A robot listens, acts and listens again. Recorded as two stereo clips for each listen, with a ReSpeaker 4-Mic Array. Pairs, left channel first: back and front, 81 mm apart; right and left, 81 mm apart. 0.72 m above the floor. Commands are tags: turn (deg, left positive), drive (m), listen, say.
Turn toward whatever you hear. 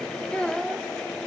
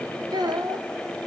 <turn deg="105"/>
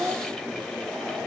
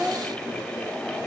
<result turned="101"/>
<say>Found it: a child speaking, straight ahead.</say>